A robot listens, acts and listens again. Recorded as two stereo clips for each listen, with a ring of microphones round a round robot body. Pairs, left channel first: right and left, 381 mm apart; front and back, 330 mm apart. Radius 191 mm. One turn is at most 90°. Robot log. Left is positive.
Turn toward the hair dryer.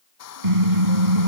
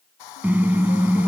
note: The hair dryer: 40° right.
cmd yaw -40
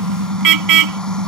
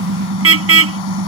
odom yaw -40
cmd idle
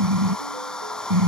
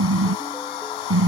end: Facing the hair dryer.